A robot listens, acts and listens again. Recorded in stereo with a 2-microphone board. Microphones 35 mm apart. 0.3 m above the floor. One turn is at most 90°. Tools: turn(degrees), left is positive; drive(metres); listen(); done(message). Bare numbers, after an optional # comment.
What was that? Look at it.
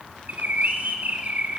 # The bird: about 55° right or 125° right.
turn(-55)
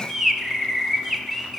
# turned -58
done("Found it: a bird, straight ahead, under 1 m away.")